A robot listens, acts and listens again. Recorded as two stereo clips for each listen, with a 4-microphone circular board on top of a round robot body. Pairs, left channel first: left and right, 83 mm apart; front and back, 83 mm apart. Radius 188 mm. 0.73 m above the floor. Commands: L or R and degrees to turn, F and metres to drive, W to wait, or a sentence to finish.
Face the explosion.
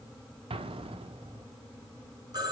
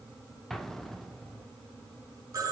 R85
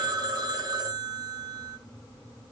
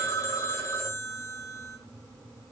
Facing where the explosion came from. I can't hear it now.